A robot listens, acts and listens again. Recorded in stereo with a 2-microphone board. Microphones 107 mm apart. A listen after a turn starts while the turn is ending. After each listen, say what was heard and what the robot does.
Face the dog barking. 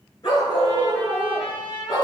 The dog barking: about 50° left or 130° left. Turn 50° left.
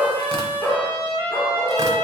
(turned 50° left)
Facing the dog barking.